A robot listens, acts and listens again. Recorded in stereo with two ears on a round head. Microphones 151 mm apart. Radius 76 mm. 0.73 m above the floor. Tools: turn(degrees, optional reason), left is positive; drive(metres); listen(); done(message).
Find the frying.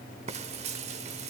turn(degrees=-40, reason="The frying: about 40° right or 140° right.")
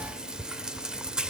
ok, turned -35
done("Found it: frying, straight ahead, 1 to 2 m away.")